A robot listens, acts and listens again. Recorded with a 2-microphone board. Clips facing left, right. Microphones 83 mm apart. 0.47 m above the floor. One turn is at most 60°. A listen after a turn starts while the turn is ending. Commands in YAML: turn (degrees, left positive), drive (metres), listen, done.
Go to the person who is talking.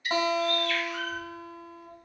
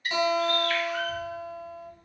turn: -45
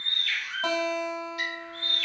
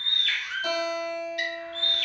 listen: true
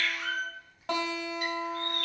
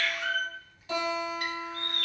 drive: 1.0
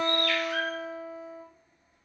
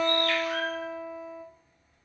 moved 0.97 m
drive: 1.0
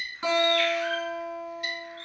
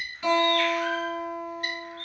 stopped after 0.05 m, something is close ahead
done: "I am next to the child speaking."